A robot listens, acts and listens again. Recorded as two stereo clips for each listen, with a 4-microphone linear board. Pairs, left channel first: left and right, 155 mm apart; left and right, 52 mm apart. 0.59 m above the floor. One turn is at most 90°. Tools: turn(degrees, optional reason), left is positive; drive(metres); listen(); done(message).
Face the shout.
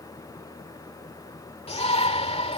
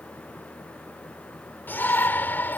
turn(degrees=40, reason="The shout: about 40° left or 140° left.")
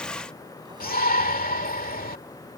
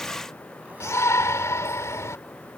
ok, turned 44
turn(degrees=90, reason="So it is at 90° left.")
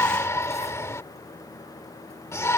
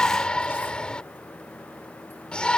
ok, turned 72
turn(degrees=20, reason="The shout is now 20° left.")
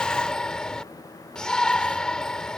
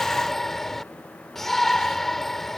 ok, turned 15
done("Found it: a shout, straight ahead.")